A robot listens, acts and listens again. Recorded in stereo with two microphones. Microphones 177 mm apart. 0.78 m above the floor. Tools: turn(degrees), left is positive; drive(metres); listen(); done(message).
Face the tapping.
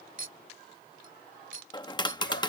turn(degrees=25)
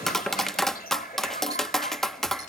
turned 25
done("Found it: tapping, straight ahead.")